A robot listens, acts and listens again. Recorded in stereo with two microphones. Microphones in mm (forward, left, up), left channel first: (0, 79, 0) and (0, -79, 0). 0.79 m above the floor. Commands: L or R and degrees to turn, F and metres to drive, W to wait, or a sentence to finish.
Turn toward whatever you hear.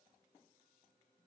W
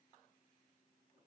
W
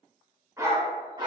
R30
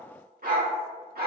R100
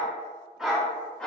Found it: a dog barking, straight ahead, 1 to 2 m away.